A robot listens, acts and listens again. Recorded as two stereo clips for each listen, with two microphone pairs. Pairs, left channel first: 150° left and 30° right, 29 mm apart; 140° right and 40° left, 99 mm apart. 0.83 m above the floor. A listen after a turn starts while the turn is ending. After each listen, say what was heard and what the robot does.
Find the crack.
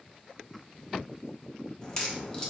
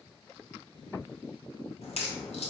The crack: 140° right. Turn 140° right.
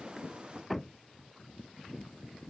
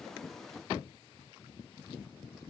I heard a crack from this way, but can't make it out now.